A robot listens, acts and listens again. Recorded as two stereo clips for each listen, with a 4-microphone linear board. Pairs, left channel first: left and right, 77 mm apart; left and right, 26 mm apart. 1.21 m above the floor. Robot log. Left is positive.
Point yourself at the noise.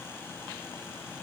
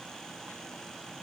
cmd idle
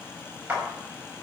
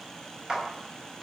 note: The clap: about 20° right or 160° right.
cmd yaw -20
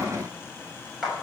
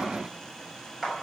end: Found it: a clap, straight ahead, over 4 m away.